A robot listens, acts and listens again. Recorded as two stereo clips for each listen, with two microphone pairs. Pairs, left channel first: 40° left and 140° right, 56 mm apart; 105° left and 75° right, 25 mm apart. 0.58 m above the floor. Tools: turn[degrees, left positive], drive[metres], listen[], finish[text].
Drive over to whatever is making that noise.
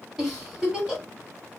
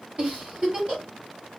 Thought: The giggle: 55° right.
Action: turn[-55]
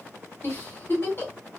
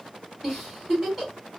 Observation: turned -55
Action: drive[1.0]
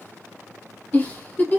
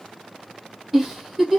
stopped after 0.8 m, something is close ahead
Action: finish[I am next to the giggle.]